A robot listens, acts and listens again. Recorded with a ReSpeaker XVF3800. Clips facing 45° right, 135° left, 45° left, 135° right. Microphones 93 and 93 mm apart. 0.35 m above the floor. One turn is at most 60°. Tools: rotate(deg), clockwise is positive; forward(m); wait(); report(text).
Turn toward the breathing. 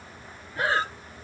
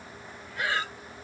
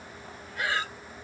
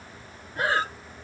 rotate(60)
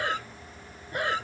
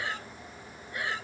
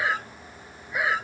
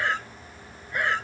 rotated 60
rotate(40)
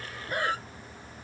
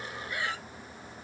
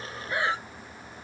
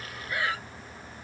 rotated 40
rotate(10)
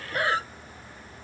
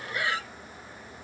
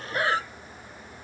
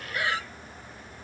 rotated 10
report("Found it: breathing, straight ahead.")